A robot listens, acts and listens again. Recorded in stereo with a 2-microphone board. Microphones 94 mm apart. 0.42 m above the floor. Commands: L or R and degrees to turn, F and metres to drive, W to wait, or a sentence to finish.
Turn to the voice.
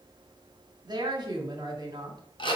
R50
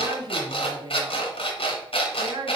R65
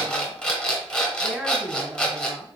Found it: a woman speaking, straight ahead.